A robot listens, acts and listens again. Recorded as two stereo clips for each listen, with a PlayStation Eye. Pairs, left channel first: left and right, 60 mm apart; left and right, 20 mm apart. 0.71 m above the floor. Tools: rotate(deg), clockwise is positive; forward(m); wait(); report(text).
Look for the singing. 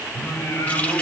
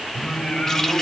rotate(-60)
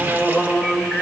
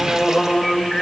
rotate(-20)
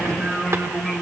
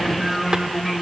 rotate(-10)
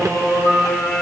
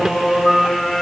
rotate(-10)
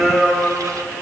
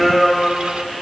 report("Found it: singing, straight ahead.")